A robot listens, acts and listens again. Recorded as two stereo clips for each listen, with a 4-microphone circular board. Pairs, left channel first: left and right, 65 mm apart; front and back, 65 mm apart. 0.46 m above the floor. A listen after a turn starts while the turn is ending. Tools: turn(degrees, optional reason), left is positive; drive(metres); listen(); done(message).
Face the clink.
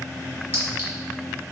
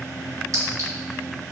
listen()
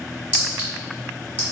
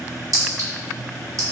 turn(degrees=-150, reason="The clink: 150° right.")
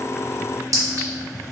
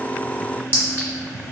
turn(degrees=-55, reason="The clink is now 55° right.")
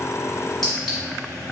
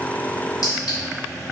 listen()
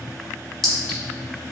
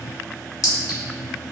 done("Found it: a clink, straight ahead, 1 to 2 m away.")